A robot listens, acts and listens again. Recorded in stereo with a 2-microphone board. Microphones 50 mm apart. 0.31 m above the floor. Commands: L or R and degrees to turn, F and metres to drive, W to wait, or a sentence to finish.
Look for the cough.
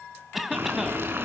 L30
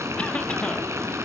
W
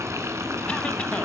W
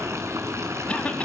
L150
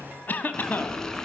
L40
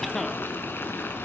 Facing the cough, 1 to 2 m away.